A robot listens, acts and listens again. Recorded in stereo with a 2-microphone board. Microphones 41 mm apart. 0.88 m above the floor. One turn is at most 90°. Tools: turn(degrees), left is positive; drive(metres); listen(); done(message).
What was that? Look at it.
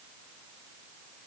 listen()
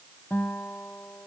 turn(degrees=60)
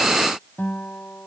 turn(degrees=60)
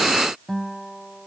done("Facing the guitar.")